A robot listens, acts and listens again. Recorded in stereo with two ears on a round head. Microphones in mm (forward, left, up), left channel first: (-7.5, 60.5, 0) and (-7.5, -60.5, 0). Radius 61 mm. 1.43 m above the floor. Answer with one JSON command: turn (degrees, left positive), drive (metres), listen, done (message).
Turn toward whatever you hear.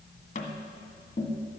{"turn": 60}
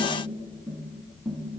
{"done": "Facing the tapping, 1 to 2 m away."}